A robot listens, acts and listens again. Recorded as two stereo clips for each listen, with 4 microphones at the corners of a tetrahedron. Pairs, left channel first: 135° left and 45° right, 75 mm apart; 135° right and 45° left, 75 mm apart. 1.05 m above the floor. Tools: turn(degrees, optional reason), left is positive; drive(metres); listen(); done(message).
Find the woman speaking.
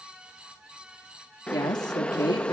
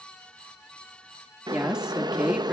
turn(degrees=120, reason="The woman speaking: 120° left.")
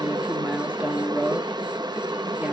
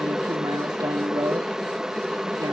turn(degrees=25, reason="The woman speaking is now 25° left.")
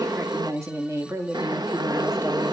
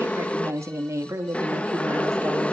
done("Found it: a woman speaking, straight ahead, 2 to 4 m away.")